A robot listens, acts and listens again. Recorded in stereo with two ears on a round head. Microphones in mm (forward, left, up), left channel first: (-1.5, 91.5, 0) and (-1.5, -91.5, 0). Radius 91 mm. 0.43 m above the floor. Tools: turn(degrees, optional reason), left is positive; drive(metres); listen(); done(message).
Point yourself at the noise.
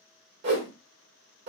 turn(degrees=-60, reason="The whoosh: about 60° right or 120° right.")
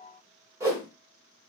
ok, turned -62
turn(degrees=-20, reason="So it is at 20° right.")
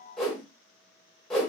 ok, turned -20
done("Facing the whoosh.")